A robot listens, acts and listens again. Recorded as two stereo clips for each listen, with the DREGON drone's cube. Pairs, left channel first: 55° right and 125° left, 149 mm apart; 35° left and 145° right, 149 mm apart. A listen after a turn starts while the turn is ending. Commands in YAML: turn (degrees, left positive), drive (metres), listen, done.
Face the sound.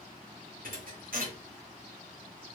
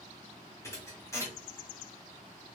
turn: 105
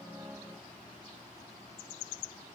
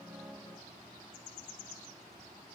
done: "I heard a thud from this way, but can't make it out now."